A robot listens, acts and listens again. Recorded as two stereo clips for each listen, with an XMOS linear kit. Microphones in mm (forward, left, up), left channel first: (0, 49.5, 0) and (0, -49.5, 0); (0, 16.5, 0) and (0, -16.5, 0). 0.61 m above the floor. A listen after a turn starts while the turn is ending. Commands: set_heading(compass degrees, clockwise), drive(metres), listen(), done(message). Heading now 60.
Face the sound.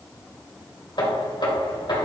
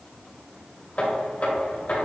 set_heading(10)
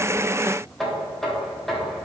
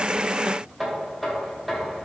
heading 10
done("Facing the knocking.")